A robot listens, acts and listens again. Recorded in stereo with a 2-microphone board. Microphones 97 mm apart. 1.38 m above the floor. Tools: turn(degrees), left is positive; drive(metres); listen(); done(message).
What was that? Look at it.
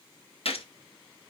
turn(degrees=90)
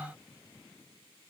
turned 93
done("Facing where the gunshot came from. I can't hear it now.")